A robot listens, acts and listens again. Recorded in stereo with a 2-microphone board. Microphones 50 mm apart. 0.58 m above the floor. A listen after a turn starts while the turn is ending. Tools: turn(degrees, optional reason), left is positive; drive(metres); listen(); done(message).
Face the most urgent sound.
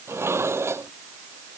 listen()
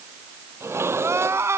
turn(degrees=-65, reason="The crying: about 65° right or 115° right.")
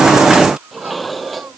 listen()
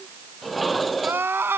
turn(degrees=-50, reason="So it is at 50° right.")
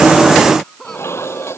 turn(degrees=10, reason="The crying is now 10° left.")
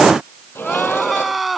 done("Found it: crying, straight ahead.")